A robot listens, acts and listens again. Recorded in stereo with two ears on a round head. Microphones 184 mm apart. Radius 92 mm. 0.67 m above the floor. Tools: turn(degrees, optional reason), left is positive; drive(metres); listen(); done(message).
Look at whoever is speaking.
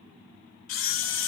listen()
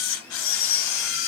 listen()
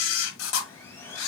done("I can't make out anyone speaking to turn to.")